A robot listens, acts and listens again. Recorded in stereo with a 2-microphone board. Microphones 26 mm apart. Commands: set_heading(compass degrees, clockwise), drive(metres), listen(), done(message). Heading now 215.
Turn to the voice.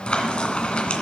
listen()
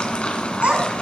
set_heading(280)
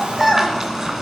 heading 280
done("Facing the child speaking.")